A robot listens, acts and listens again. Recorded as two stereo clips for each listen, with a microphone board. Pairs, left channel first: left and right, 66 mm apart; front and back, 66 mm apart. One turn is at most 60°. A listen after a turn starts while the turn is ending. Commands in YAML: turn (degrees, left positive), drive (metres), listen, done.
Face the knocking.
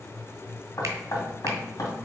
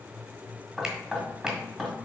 turn: 60
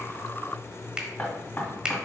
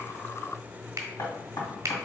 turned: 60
turn: 30
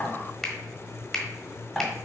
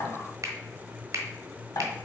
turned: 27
done: "Facing the knocking."